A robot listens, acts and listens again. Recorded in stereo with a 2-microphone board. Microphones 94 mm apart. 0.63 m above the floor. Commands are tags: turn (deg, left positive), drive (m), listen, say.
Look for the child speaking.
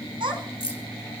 <turn deg="-55"/>
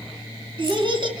<turn deg="-50"/>
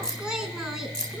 <say>Found it: a child speaking, straight ahead, 2 to 4 m away.</say>